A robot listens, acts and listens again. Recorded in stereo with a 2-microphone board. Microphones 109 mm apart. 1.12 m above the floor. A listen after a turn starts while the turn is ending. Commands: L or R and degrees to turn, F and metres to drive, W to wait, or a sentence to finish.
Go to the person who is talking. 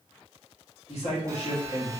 L65
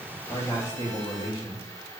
L45
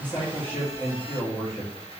L20
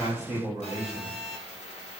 F1.0
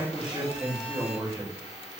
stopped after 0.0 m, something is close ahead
Something is in my way. I am facing the man speaking but have not reached it.